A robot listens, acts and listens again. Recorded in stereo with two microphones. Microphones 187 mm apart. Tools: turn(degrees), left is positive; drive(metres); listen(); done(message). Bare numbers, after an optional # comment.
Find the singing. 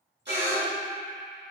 # The singing: about 60° right or 120° right.
turn(-60)
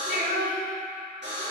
# So it is at 65° right.
turn(-65)
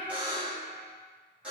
done("Found it: singing, straight ahead, 2 to 4 m away.")